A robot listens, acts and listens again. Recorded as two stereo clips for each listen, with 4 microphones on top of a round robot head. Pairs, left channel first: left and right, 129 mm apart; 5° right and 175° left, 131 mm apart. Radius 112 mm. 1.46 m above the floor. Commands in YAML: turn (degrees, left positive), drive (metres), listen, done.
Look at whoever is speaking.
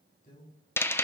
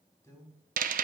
turn: 65
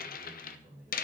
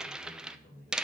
done: "Found it: a man speaking, straight ahead, over 4 m away."